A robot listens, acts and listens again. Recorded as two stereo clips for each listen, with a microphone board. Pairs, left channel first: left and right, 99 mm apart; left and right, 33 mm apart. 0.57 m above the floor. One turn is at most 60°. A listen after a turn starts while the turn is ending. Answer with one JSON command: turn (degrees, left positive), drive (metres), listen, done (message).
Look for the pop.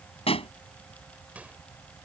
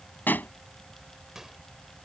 {"turn": 60}
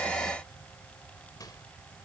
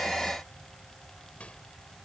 {"listen": true}
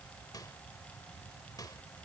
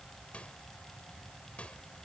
{"done": "I heard a pop, but can't make it out now. It was about 15° left or 45° left."}